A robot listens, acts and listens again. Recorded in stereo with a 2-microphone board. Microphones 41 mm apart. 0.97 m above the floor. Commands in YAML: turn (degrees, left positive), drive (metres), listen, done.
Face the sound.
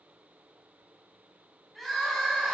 turn: 30
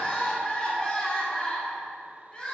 turn: 150
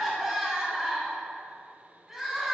done: "Found it: crying, straight ahead, 1 to 2 m away."